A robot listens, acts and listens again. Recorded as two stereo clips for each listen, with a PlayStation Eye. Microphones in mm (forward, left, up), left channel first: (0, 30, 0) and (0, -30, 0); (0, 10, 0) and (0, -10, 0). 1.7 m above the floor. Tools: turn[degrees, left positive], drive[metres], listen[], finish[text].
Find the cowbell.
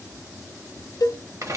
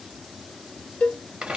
Action: turn[90]
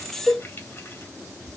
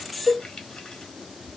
Action: finish[Found it: a cowbell, straight ahead, under 1 m away.]